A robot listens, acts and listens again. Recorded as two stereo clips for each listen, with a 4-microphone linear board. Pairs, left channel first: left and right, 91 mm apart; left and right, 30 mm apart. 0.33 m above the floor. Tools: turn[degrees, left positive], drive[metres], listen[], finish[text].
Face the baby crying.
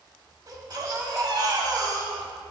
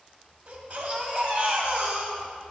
Thought: The baby crying: about 50° right or 130° right.
Action: turn[-50]
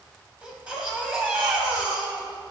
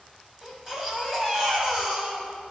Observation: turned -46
Thought: So it is at 15° right.
Action: turn[-15]
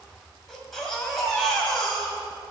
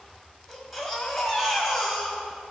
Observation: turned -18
Action: finish[Found it: a baby crying, straight ahead.]